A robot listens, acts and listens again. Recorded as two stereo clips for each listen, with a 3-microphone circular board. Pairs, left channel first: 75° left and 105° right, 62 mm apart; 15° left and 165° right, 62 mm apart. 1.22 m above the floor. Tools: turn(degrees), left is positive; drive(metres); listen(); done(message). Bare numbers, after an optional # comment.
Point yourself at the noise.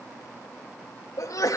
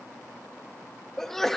# The sneeze: 100° left.
turn(100)
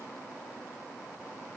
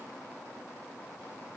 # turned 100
done("I heard a sneeze from this way, but can't make it out now.")